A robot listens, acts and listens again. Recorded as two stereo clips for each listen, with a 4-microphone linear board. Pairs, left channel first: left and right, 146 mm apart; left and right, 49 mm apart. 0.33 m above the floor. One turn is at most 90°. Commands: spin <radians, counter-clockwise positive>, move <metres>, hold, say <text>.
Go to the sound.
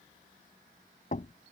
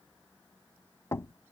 spin 1.13
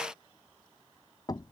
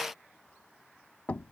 spin 0.52
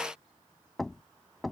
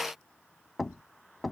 move 1.0
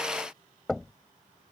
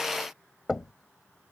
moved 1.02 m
move 1.0
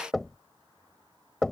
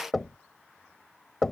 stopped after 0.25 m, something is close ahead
say Arrived at the knocking, straight ahead.